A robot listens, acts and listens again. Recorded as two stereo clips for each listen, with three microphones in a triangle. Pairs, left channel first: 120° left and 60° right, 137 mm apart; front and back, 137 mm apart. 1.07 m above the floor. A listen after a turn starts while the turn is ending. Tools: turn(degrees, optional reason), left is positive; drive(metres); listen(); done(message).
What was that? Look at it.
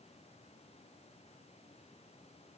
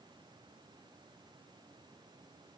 listen()
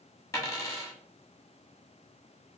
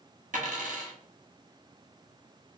turn(degrees=-175, reason="The dropped coin: 175° right.")
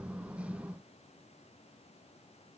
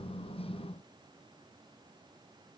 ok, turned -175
done("I heard a dropped coin from this way, but can't make it out now.")